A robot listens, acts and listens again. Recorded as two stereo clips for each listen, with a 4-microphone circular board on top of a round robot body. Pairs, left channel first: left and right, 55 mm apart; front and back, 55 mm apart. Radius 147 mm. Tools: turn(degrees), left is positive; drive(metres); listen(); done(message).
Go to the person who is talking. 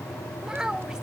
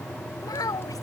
turn(degrees=-10)
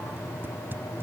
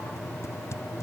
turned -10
listen()
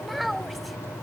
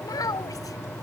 drive(metres=1.0)
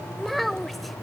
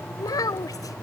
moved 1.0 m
drive(metres=1.0)
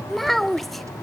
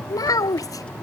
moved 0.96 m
drive(metres=1.0)
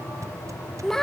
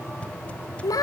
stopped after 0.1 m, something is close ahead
turn(degrees=10)
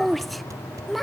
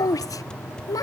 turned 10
done("I am next to the child speaking.")